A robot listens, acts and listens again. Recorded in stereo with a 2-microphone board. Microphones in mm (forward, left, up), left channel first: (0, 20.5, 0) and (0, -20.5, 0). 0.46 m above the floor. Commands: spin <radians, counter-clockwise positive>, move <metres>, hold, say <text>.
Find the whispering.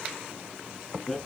hold
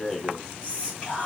spin -0.52
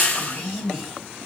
say Found it: whispering, straight ahead.